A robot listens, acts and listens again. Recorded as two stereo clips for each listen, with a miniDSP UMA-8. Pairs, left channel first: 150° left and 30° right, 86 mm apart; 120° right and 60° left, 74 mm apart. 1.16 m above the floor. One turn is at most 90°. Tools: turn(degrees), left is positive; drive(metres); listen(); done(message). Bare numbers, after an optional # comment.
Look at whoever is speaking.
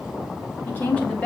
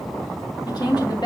# The woman speaking: 130° right.
turn(-90)
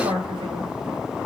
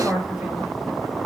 # The woman speaking is now 15° right.
turn(-15)
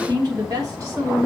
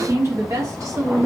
# The woman speaking is now 20° left.
turn(20)
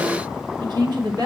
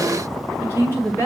done("Found it: a woman speaking, straight ahead, 2 to 4 m away.")